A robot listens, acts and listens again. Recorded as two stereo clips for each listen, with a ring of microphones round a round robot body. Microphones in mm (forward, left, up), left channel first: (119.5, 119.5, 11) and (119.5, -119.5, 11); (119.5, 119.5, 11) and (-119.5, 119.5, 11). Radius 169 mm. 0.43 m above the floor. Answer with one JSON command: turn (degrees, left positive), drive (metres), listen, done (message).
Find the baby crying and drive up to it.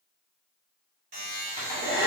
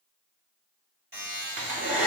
{"listen": true}
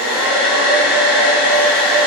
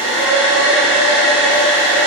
{"listen": true}
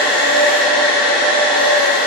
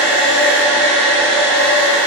{"done": "I can't make out a baby crying, only a buzzer and a hair dryer."}